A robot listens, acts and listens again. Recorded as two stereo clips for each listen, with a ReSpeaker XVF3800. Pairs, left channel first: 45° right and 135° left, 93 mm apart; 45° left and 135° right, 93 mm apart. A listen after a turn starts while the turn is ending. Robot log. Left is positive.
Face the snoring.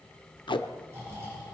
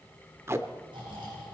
note: The snoring: 165° right.
cmd yaw -165
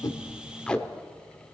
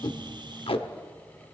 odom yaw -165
cmd idle
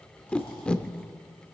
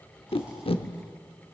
cmd idle
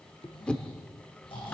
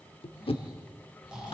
note: The snoring is now 55° right.
cmd yaw -55
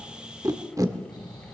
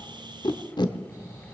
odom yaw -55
end: Facing the snoring.